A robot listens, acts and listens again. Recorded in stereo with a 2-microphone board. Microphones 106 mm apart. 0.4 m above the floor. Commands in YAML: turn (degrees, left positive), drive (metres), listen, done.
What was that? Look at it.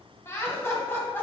turn: 20
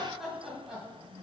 done: "Found it: laughter, straight ahead."